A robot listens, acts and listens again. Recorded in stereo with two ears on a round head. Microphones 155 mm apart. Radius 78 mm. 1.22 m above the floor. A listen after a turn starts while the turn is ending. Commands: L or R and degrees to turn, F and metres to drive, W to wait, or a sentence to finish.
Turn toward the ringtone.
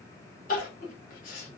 W
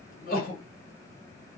W
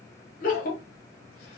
I can't make out a ringtone to turn to.